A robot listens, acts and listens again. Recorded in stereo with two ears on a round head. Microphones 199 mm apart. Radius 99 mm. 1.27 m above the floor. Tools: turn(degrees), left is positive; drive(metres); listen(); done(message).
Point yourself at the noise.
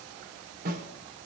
turn(degrees=-45)
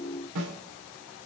turn(degrees=-90)
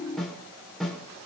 done("Found it: a snare drum, straight ahead, over 4 m away.")